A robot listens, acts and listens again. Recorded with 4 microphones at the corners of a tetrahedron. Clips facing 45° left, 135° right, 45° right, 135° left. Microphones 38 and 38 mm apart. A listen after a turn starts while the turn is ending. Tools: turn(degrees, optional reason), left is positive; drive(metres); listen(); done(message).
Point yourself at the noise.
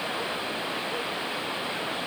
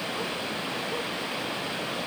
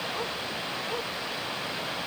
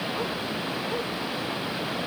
listen()
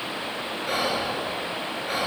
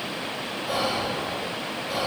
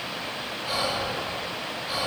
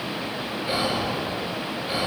turn(degrees=70, reason="The whispering: 70° left.")
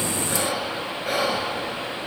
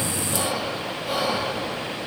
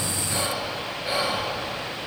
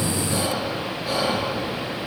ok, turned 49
turn(degrees=20, reason="The whispering is now 20° left.")
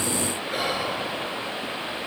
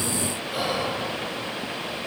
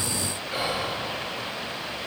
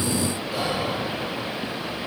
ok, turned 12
turn(degrees=10, reason="The whispering is now 10° left.")
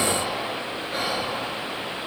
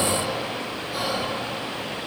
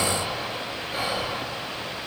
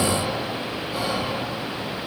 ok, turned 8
done("Found it: whispering, straight ahead.")